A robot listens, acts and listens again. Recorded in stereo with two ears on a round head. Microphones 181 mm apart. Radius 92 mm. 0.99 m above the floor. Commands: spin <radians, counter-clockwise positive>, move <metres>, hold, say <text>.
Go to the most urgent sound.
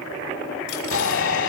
spin 1.31
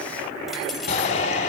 spin 0.61
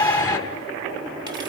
spin 0.17
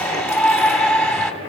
move 1.0
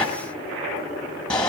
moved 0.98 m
move 1.0
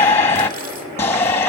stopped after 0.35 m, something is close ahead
spin 0.17
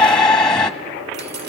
say Arrived at the shout, straight ahead.